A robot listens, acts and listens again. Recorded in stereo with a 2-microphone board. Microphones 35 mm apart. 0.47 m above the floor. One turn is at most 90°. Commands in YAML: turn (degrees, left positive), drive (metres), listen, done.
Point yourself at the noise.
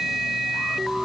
listen: true
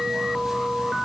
listen: true
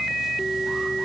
done: "I can't make out anything to turn to."